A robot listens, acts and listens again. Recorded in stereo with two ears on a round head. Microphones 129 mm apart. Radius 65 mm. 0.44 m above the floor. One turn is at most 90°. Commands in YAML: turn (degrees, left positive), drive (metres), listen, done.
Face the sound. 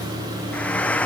turn: 30
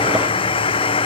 turn: 90
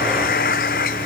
turn: 60
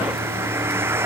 turn: -15
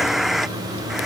done: "Facing the frying."